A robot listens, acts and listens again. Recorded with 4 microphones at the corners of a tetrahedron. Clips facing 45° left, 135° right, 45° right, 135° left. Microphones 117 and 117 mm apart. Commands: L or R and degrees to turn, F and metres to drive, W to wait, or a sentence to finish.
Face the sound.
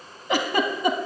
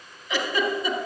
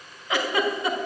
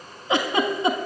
L70
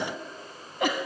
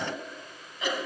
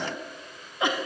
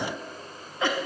L25
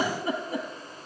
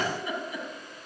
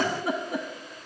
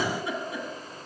Facing the giggle.